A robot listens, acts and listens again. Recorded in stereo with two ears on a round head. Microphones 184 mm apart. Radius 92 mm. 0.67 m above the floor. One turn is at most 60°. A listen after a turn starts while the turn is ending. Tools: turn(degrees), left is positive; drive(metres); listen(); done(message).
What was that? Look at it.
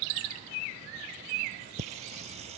turn(degrees=-30)
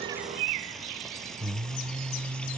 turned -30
done("Facing the singing.")